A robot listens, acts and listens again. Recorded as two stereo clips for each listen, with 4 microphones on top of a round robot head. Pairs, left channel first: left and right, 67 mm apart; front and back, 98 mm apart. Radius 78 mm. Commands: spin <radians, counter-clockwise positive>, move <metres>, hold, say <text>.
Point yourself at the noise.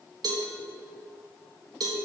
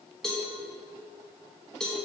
spin -1.48
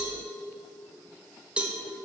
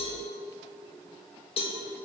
spin -0.26
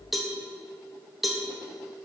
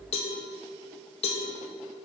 say Facing the cowbell.